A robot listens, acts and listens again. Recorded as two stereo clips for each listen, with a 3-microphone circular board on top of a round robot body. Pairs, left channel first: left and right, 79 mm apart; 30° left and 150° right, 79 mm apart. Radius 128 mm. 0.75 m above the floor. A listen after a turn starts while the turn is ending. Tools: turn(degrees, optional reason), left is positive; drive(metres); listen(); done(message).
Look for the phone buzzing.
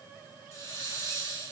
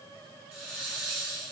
listen()
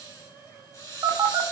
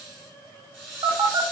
turn(degrees=-155, reason="The phone buzzing: 155° right.")
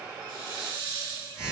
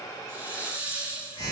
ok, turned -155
turn(degrees=-10, reason="The phone buzzing is now 10° right.")
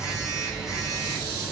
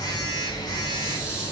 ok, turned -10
done("Found it: a phone buzzing, straight ahead.")